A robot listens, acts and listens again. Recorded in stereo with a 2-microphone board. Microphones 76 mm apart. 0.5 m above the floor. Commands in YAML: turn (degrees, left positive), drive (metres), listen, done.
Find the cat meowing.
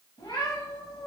turn: 90
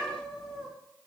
done: "Found it: a cat meowing, straight ahead."